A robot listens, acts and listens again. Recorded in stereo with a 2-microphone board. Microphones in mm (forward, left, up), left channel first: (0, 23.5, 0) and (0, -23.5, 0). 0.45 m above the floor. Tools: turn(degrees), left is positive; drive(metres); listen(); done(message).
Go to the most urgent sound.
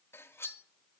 listen()
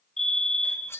turn(degrees=30)
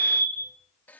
turn(degrees=140)
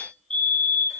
turn(degrees=15)
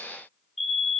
drive(metres=1.0)
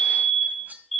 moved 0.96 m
drive(metres=1.0)
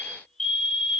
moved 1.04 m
turn(degrees=15)
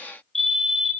drive(metres=1.0)
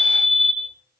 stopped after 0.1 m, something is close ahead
done("Arrived at the fire alarm, straight ahead.")